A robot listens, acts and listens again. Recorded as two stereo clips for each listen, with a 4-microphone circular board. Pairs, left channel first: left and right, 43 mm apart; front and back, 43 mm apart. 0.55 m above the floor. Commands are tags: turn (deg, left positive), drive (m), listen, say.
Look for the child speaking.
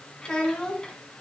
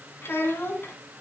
<turn deg="20"/>
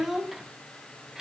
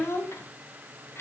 <turn deg="-10"/>
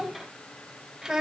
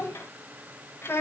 <turn deg="-10"/>
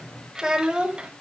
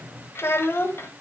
<turn deg="-20"/>
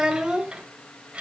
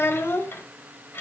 <turn deg="-25"/>
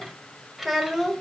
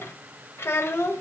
<say>Found it: a child speaking, straight ahead, 1 to 2 m away.</say>